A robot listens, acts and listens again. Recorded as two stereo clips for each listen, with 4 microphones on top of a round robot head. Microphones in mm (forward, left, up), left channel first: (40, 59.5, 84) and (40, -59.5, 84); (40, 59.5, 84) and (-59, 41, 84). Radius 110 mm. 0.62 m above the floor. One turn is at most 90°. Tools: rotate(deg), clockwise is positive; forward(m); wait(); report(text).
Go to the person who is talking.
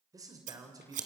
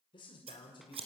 rotate(30)
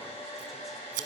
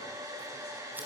wait()
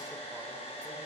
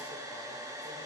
wait()
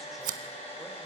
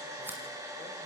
report("Facing where the man speaking came from. I can't hear it now. I did not reach it.")